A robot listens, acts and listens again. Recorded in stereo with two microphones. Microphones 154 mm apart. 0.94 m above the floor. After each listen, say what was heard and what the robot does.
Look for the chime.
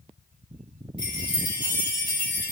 The chime: about 30° left or 150° left. Turn 30° left.
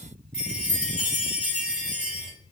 Found it: a chime, straight ahead, 1 to 2 m away.